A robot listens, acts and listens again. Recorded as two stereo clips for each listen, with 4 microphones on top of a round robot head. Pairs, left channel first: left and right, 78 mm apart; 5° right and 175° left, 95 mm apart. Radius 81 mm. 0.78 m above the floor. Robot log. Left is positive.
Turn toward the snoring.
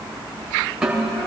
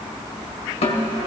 cmd idle
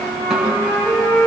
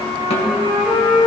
cmd idle
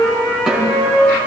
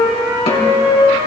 end: I can't make out snoring, only a flute and a snare drum.